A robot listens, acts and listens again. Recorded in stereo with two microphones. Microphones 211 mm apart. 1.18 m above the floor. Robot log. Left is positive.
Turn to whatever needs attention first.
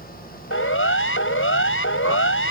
note: The siren: about 65° left or 115° left.
cmd yaw +65
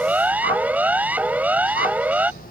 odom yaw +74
end: Found it: a siren, straight ahead.